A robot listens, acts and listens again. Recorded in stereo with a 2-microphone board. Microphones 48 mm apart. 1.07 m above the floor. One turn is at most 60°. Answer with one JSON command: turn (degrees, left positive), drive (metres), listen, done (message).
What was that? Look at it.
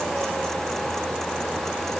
{"listen": true}
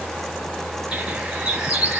{"turn": -20}
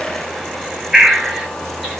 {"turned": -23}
{"done": "Facing the bird, 1 to 2 m away."}